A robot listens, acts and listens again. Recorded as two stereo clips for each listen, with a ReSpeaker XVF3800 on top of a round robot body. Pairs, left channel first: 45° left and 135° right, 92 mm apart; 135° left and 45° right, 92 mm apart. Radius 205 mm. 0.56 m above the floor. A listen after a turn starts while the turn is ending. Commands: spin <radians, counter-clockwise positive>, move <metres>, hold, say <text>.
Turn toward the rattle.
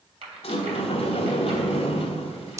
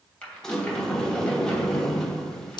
spin -2.62
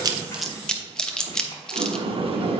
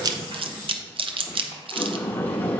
hold
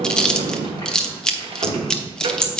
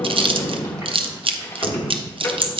hold
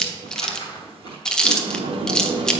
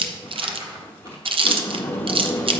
say Found it: a rattle, straight ahead.